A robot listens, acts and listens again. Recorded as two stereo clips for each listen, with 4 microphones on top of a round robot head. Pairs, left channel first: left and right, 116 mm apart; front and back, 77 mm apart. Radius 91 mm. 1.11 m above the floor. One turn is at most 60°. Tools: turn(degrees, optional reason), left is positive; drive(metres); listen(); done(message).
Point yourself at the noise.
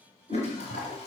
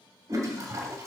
turn(degrees=60, reason="The toilet flushing: 135° left.")
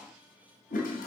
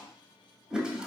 turn(degrees=60, reason="The toilet flushing is now 100° left.")
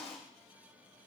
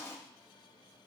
turn(degrees=60, reason="The toilet flushing is now 60° left.")
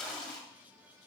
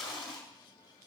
done("Found it: a toilet flushing, straight ahead, 1 to 2 m away.")